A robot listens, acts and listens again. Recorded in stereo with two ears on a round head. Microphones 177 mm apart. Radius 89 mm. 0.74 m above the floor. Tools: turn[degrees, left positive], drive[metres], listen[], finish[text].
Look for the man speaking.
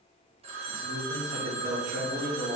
Thought: The man speaking: about 35° right or 145° right.
Action: turn[-35]
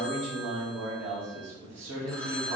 Thought: So it is at 105° right.
Action: turn[-105]
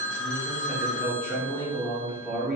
Action: finish[Found it: a man speaking, straight ahead.]